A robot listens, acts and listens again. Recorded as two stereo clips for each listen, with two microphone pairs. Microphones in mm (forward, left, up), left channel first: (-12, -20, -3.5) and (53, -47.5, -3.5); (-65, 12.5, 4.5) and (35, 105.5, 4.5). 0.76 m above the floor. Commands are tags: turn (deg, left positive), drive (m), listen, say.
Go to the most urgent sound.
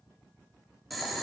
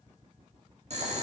<listen/>
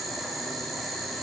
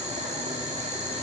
<listen/>
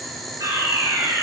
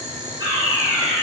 <turn deg="-10"/>
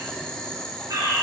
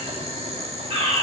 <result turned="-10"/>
<drive m="1.0"/>
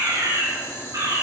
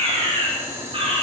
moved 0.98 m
<drive m="1.0"/>
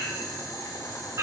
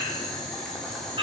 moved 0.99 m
<drive m="1.0"/>
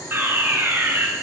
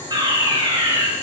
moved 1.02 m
<turn deg="10"/>
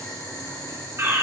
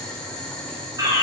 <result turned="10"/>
<drive m="1.0"/>
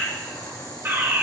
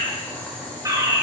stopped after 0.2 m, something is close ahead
<say>Arrived at the fire alarm, straight ahead.</say>